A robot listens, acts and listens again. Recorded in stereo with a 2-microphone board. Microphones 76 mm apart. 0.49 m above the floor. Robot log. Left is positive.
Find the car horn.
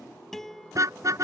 note: The car horn: about 45° right or 135° right.
cmd yaw -45
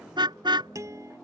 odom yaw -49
note: So it is at 85° right.
cmd yaw -85
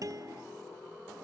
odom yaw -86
cmd idle
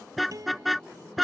end: Found it: a car horn, straight ahead.